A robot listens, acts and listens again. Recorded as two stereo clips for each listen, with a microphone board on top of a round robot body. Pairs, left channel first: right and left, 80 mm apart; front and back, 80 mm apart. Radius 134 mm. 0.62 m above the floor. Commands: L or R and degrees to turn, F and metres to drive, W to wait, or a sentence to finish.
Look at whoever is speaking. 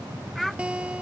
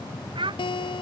L180
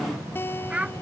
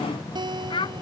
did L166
L15
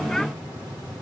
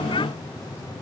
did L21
W
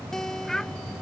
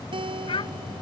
Facing the child speaking.